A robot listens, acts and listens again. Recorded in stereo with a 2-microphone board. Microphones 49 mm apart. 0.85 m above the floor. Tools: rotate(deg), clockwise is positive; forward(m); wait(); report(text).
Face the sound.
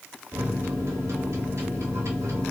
rotate(75)
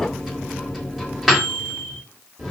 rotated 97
report("Facing the microwave, 1 to 2 m away.")